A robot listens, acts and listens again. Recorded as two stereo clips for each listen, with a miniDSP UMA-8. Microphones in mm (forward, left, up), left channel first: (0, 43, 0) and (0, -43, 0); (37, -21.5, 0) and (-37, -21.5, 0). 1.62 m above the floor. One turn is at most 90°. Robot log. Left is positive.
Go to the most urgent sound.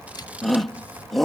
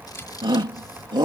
note: The shout: 175° left.
cmd yaw +90
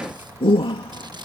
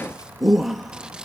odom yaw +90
note: The shout is now 90° left.
cmd yaw +90
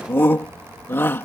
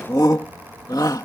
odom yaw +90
note: The shout is now 25° left.
cmd yaw +25
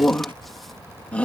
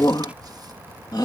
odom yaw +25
note: The shout is now 15° left.
cmd yaw +15
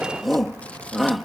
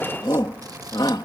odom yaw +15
cmd fwd 1.0
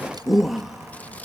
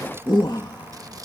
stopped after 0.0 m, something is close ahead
end: Blocked. The shout is further on, straight ahead.